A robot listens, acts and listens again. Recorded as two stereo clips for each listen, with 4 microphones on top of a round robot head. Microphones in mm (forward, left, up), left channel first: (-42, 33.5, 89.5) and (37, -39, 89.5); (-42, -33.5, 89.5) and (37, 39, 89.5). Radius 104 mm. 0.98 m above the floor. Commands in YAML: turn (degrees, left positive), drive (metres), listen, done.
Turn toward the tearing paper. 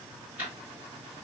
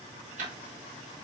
listen: true
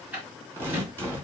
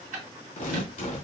turn: -110
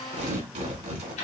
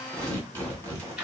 turn: -20
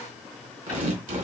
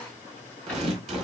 done: "Found it: tearing paper, straight ahead."